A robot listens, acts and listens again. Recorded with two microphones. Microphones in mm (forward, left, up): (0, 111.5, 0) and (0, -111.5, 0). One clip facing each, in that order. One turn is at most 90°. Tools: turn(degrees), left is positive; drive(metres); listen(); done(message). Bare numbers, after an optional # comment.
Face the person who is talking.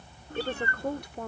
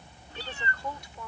# The woman speaking: about 60° left or 120° left.
turn(60)
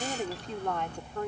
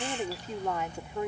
# So it is at 10° right.
turn(-10)
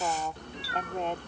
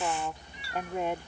# The woman speaking is now 10° right.
turn(-10)
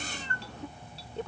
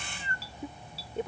# The woman speaking is now 20° right.
turn(-20)
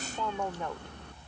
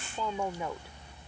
done("Facing the woman speaking.")